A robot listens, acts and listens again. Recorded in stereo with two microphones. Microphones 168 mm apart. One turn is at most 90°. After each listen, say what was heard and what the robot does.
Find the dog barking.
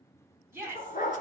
The dog barking: about 55° left or 125° left. Turn 55° left.
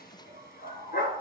So it is at 70° left. Turn 70° left.
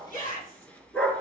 Found it: a dog barking, straight ahead, 1 to 2 m away.